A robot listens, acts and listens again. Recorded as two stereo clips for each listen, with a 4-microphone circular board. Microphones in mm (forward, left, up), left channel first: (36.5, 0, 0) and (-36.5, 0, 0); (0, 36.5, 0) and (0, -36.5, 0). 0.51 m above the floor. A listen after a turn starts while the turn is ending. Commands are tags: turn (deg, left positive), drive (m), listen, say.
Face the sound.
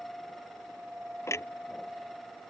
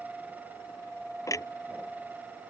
<turn deg="50"/>
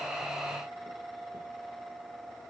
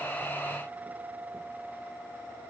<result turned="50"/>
<say>Facing where the clunk came from. I can't hear it now.</say>